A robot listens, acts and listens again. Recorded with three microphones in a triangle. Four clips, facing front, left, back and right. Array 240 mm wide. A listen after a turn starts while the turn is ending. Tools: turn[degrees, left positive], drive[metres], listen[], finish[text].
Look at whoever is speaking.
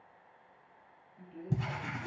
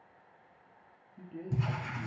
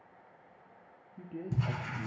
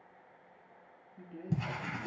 Thought: The man speaking: 175° right.
Action: turn[-175]
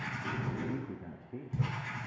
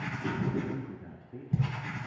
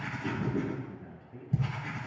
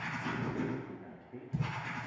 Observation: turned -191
Thought: The man speaking is now 15° left.
Action: turn[15]
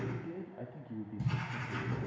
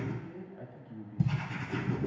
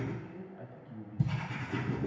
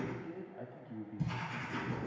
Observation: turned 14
Action: finish[Found it: a man speaking, straight ahead, under 1 m away.]